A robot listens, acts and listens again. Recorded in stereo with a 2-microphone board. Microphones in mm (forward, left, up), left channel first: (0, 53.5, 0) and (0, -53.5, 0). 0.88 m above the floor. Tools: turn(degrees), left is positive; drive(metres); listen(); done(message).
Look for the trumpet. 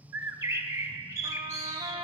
turn(degrees=-60)
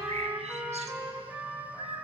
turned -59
turn(degrees=-15)
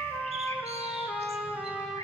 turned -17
done("Found it: a trumpet, straight ahead, 1 to 2 m away.")